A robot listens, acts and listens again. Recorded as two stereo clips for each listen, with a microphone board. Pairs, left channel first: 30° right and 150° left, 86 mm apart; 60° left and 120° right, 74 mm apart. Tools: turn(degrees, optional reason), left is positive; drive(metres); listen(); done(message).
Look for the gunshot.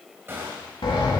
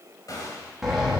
turn(degrees=90, reason="The gunshot: 90° left.")
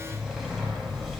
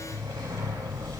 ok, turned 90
done("Facing where the gunshot came from. I can't hear it now.")